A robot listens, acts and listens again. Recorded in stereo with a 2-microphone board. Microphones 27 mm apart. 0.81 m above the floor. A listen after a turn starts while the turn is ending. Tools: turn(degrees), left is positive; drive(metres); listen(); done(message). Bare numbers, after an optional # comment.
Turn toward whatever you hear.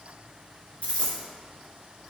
# The dropped coin: about 60° left or 120° left.
turn(60)
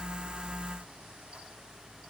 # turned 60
listen()
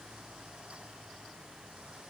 done("I heard a dropped coin, but can't make it out now. It was about straight ahead or 60° left.")